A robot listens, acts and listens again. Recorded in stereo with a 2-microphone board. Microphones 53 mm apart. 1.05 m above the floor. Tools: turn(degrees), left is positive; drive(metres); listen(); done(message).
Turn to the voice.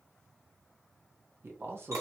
turn(degrees=-50)
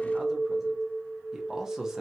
turn(degrees=-10)
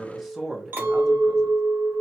done("Found it: a man speaking, straight ahead, 1 to 2 m away.")